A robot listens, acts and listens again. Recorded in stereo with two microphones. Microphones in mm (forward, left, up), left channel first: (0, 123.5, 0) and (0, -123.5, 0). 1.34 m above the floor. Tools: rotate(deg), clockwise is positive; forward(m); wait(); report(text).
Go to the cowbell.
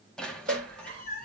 rotate(30)
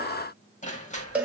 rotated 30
forward(1.0)
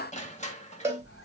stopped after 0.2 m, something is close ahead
rotate(10)
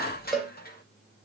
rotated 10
report("Blocked. The cowbell is further on, straight ahead.")